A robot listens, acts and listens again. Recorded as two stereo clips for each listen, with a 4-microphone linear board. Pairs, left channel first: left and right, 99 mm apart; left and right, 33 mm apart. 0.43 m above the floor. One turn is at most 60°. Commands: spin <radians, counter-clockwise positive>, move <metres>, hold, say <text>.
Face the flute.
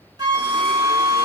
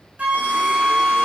spin -0.79
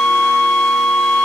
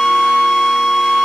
say Facing the flute.